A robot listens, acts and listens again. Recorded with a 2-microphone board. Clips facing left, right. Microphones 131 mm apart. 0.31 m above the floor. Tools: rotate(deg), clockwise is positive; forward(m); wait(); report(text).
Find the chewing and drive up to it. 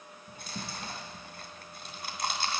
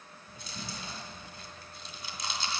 rotate(-55)
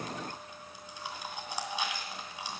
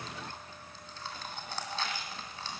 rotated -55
rotate(-15)
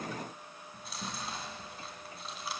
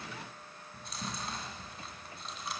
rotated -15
forward(1.0)
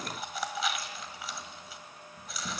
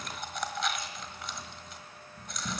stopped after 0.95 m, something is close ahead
report("I am next to the chewing.")